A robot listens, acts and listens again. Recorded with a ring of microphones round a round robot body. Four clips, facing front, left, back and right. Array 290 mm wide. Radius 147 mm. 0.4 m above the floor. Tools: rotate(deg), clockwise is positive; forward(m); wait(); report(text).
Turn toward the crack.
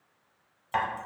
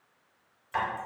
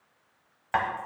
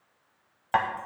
wait()
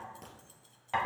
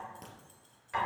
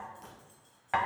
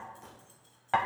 rotate(-60)
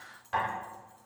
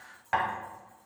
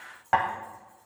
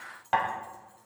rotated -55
report("Facing where the crack came from. I can't hear it now.")